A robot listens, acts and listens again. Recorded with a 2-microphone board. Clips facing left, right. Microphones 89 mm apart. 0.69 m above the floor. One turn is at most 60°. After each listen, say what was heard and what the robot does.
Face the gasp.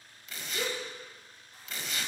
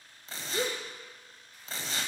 The gasp: about 40° right or 140° right. Turn 40° right.
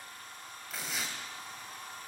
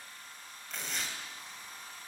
Keep listening.
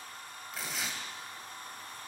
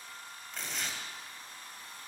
I heard a gasp, but can't make it out now. It was about straight ahead or 100° right.